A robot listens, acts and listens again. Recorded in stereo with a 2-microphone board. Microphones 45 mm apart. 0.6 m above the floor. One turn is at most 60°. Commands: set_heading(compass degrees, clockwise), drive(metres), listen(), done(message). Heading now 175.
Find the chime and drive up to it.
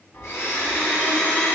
set_heading(115)
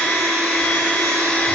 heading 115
listen()
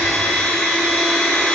listen()
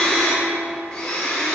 done("I heard a chime, but can't make it out now. It was about 10° left or 50° left. I did not reach it.")